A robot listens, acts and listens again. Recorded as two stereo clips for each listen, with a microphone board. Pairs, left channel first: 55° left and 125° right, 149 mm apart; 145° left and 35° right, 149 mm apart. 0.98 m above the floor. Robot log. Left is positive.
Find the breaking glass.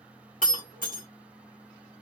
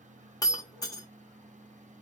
note: The breaking glass: 80° left.
cmd yaw +80
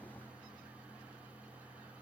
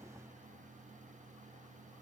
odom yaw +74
end: Facing where the breaking glass came from. I can't hear it now.